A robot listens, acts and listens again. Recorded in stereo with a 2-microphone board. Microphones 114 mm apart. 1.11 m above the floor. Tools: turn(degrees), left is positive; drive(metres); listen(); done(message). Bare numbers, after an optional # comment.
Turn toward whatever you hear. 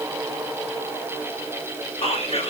# The whispering: about 65° left or 115° left.
turn(65)
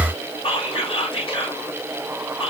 # So it is at 50° left.
turn(50)
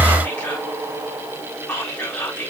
# The whispering is now 15° left.
turn(15)
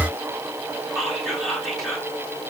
done("Found it: whispering, straight ahead, 2 to 4 m away.")